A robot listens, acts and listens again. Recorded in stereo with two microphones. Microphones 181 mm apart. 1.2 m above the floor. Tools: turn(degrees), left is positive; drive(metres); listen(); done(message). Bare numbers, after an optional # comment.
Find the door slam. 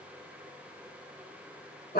listen()
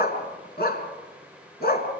listen()
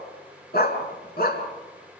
done("I can't make out a door slam, only a dog barking.")